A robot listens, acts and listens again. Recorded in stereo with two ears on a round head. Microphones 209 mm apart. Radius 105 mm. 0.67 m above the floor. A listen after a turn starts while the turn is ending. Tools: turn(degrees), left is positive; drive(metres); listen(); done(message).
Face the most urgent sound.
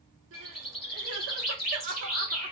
turn(degrees=-55)
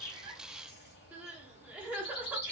turn(degrees=-10)
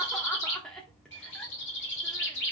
done("Found it: crying, straight ahead, under 1 m away.")